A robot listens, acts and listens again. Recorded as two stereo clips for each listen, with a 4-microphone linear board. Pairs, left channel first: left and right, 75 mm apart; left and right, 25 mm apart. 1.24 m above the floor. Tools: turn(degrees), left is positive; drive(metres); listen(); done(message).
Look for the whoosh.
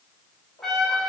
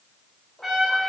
listen()
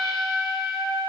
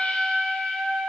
listen()
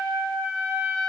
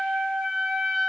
done("I can't make out a whoosh, only a trumpet.")